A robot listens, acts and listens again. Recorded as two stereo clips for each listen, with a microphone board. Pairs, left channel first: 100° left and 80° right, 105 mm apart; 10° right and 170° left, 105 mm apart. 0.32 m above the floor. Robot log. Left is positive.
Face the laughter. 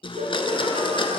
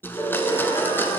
note: The laughter: 60° right.
cmd yaw -60
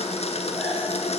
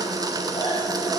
cmd idle
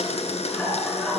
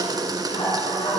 note: The laughter is now 20° left.
cmd yaw +20
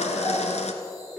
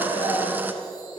end: Facing the laughter.